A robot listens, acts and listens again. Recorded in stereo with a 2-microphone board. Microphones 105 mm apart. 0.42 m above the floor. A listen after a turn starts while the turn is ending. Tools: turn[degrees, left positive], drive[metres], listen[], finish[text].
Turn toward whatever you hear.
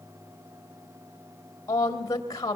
Thought: The woman speaking: about 35° left or 145° left.
Action: turn[35]
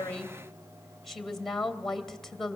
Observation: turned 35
Action: finish[Found it: a woman speaking, straight ahead, 2 to 4 m away.]